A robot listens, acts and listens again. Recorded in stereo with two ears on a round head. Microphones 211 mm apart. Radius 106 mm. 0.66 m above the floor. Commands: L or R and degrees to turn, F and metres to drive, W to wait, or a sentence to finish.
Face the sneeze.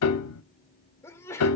L30
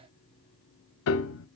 W
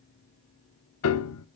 I heard a sneeze, but can't make it out now. It was about 20° right or 140° left.